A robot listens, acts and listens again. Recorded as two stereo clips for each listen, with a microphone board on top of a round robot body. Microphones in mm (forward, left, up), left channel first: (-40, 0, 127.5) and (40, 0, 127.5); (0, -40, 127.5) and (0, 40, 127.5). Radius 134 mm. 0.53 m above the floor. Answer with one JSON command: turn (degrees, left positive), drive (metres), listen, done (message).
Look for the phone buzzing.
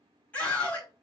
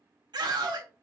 {"listen": true}
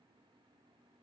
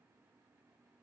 {"listen": true}
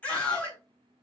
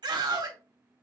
{"done": "I can't make out a phone buzzing to turn to."}